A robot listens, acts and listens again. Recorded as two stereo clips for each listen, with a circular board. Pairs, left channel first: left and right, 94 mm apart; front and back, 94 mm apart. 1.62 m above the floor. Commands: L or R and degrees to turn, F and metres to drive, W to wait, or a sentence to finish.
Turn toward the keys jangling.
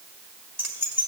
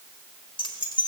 R25
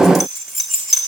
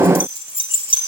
Found it: keys jangling, straight ahead, 2 to 4 m away.